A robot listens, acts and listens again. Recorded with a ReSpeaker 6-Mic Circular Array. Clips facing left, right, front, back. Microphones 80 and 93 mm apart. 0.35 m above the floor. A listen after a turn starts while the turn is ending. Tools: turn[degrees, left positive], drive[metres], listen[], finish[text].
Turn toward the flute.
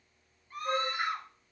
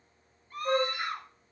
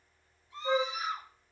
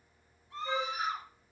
Thought: The flute: 40° right.
Action: turn[-40]
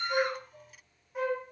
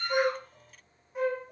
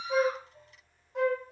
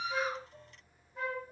Action: finish[Found it: a flute, straight ahead, 2 to 4 m away.]